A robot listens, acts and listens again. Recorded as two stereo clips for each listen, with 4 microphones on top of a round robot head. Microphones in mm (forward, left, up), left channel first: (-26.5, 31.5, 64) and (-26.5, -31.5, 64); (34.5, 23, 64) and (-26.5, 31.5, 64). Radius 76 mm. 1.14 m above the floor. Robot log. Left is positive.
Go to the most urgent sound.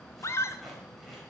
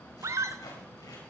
note: The scream: 135° left.
cmd yaw +135
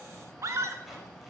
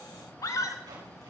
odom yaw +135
note: The scream is now 45° right.
cmd yaw -45
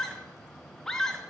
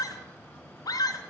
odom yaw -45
cmd fwd 1.0
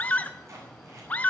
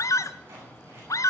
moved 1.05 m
note: The scream is now 20° left.
cmd yaw +20
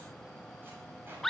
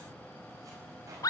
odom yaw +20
cmd fwd 1.0
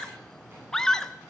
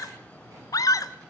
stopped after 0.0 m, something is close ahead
end: I am next to the scream.